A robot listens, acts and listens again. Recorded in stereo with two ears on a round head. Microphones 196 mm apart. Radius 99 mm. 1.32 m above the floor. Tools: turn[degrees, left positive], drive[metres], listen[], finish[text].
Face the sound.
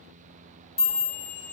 Thought: The chime: about 60° left or 120° left.
Action: turn[60]
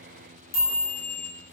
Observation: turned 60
Thought: So it is at 45° left.
Action: turn[45]
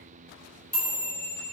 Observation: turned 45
Action: finish[Facing the chime.]